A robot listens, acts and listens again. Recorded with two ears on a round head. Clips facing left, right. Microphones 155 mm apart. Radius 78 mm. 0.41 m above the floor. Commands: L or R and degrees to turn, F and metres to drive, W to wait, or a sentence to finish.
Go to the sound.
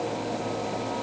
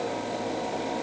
W
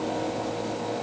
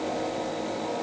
W
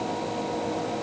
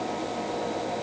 I can't make out anything.